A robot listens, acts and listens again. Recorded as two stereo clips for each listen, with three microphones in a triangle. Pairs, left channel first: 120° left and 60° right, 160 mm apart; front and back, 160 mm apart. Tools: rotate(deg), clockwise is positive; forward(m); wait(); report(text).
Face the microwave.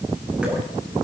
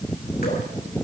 wait()
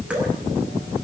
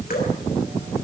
wait()
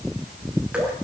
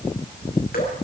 report("I can't make out a microwave to turn to.")